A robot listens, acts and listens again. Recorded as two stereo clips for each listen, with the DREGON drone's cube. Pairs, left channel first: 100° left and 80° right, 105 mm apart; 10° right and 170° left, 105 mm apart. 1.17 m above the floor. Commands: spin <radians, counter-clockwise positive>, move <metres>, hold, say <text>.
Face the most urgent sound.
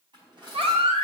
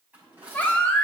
spin -1.48
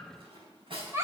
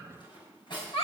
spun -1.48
spin -0.35
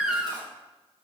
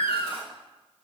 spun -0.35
say Facing the baby crying, 1 to 2 m away.